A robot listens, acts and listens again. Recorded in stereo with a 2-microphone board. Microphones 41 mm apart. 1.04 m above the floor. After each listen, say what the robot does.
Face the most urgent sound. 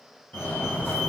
Turn 45° left.
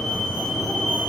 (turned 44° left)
Turn 10° left.
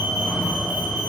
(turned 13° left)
Facing the fire alarm.